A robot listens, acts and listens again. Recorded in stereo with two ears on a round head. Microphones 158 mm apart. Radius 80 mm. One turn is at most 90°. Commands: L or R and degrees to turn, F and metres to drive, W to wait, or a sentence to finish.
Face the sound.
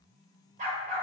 R50
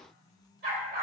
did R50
R55
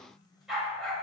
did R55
Facing the dog barking.